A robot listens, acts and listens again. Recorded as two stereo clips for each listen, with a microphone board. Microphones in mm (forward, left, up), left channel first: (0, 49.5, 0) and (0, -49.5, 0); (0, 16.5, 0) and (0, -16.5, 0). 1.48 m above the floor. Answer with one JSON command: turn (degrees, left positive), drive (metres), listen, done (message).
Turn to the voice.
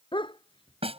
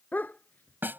{"listen": true}
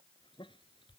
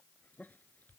{"listen": true}
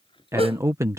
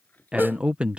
{"turn": -30}
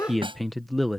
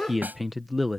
{"done": "Found it: a man speaking, straight ahead."}